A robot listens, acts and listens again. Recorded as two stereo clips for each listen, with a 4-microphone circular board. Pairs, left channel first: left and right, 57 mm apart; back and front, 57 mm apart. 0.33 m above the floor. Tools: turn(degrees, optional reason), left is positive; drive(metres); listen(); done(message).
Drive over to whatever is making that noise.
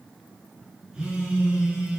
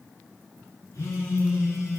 turn(degrees=-165, reason="The phone buzzing: 165° right.")
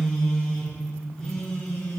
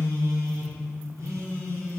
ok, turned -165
turn(degrees=10, reason="The phone buzzing is now 10° left.")
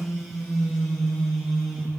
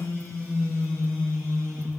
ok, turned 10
drive(metres=1.0)
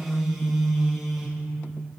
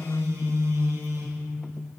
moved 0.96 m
drive(metres=1.0)
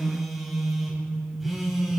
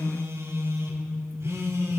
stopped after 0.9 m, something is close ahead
turn(degrees=-10, reason="The phone buzzing is now 10° right.")
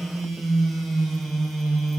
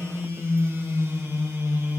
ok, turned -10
done("Arrived at the phone buzzing, straight ahead.")